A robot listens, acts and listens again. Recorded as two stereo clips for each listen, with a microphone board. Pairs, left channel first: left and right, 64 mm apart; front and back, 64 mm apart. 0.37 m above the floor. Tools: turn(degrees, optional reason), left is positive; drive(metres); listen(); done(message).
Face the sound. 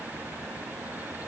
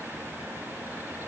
listen()
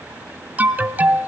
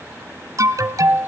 turn(degrees=-155, reason="The alarm: 155° right.")
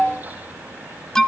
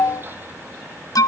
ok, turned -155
turn(degrees=10, reason="The alarm is now 10° left.")
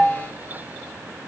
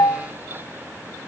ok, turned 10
done("Facing the alarm.")